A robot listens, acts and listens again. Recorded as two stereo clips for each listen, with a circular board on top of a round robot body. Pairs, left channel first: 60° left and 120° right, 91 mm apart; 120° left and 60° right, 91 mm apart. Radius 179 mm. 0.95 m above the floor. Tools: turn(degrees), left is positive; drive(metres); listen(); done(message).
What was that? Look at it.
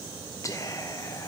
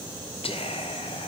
turn(degrees=115)
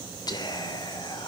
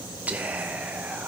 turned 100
turn(degrees=15)
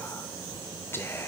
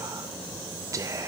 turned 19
done("Found it: whispering, straight ahead.")